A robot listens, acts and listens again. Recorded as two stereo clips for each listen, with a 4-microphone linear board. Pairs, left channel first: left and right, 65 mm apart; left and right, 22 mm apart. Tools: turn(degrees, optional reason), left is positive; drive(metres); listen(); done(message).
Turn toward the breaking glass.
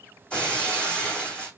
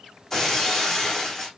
turn(degrees=15, reason="The breaking glass: about 15° left or 165° left.")
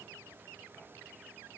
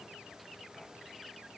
listen()
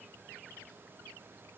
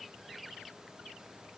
done("I heard breaking glass, but can't make it out now. It was about straight ahead or 150° left.")